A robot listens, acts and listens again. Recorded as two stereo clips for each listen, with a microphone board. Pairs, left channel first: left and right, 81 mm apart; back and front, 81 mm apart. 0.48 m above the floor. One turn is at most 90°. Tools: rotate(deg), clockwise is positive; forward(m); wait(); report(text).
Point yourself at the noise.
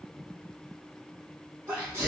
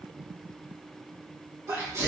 rotate(40)
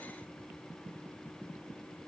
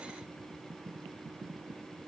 report("I heard a sneeze from this way, but can't make it out now.")